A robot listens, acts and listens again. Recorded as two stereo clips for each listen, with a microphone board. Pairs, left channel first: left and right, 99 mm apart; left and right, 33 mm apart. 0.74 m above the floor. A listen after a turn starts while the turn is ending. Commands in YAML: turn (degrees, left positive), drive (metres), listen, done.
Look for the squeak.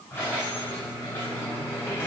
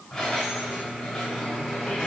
turn: 25
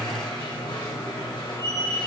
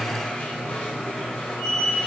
turn: 135
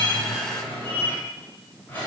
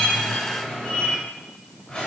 turn: 20
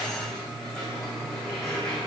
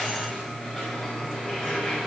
done: "Found it: a squeak, straight ahead, 2 to 4 m away."